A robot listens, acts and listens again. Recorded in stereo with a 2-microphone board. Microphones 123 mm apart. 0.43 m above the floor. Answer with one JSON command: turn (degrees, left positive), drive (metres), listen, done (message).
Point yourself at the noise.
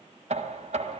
{"turn": -65}
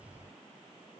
{"listen": true}
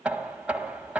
{"turn": -10}
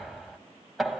{"done": "Found it: knocking, straight ahead, 1 to 2 m away."}